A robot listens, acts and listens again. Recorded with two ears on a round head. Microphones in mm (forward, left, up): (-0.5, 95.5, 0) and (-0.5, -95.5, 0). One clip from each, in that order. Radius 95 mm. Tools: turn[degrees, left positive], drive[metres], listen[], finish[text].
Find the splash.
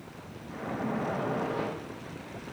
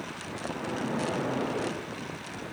Thought: The splash: about 55° left or 125° left.
Action: turn[55]
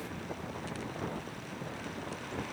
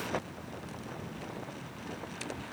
Action: listen[]
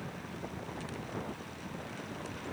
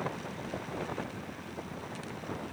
Action: finish[I heard a splash, but can't make it out now. It was about straight ahead or 70° left.]